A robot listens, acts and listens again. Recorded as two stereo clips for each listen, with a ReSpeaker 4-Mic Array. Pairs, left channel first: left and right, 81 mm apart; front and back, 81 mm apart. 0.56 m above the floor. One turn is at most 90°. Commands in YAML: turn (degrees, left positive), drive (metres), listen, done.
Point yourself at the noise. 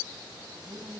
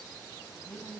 turn: -70
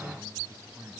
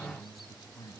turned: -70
turn: -30
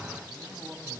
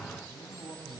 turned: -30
turn: -10
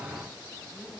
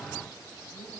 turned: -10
listen: true
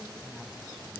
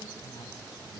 listen: true
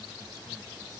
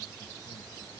done: "Facing where the man speaking came from. I can't hear it now."